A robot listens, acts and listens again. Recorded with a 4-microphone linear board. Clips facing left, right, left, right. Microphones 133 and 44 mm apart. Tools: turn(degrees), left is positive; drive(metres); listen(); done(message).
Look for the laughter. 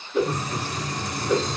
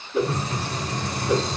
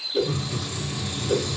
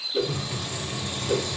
turn(degrees=15)
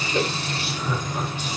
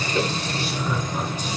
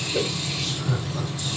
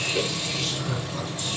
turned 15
listen()
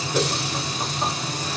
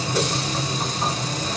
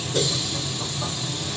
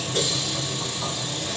listen()
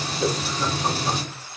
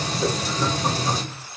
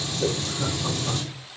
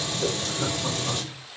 done("I heard laughter, but can't make it out now. It was about straight ahead or 150° left.")